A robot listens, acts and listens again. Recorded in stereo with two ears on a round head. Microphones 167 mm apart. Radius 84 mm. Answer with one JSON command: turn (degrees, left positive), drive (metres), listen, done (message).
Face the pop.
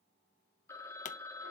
{"turn": 40}
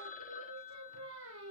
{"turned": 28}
{"listen": true}
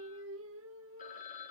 {"done": "I heard a pop, but can't make it out now. It was about 10° left or 115° left."}